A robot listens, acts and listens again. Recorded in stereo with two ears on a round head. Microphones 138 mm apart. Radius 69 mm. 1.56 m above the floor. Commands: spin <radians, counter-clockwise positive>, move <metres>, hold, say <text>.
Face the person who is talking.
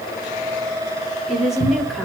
spin 0.52
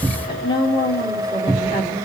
spin 2.53
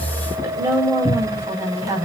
spin -0.35
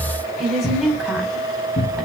say Facing the woman speaking.